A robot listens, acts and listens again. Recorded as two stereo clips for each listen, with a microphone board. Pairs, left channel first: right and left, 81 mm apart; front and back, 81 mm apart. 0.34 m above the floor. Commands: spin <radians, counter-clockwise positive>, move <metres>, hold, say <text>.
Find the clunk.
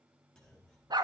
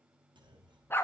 spin -2.97
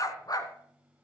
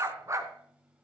say Facing where the clunk came from. I can't hear it now.